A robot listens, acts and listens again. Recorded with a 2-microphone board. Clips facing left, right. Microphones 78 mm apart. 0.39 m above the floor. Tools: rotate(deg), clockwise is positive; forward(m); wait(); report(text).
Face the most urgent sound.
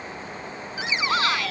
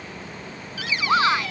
rotate(25)
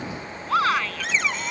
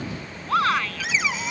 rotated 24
report("Facing the shout.")